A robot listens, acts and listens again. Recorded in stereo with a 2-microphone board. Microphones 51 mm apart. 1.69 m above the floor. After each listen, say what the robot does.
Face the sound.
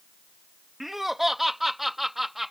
Turn 30° right.
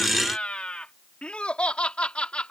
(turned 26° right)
Turn 20° left.
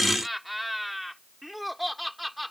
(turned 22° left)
Found it: laughter, straight ahead.